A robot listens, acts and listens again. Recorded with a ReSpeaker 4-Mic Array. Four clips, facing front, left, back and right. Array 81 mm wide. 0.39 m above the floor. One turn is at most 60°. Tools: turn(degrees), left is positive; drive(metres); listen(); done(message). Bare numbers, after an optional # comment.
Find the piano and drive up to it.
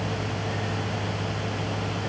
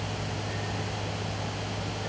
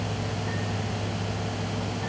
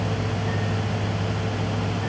listen()
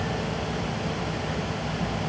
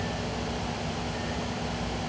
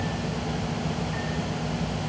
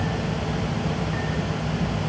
listen()
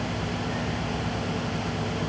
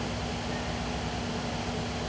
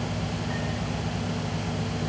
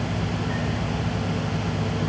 done("I can't make out a piano to turn to.")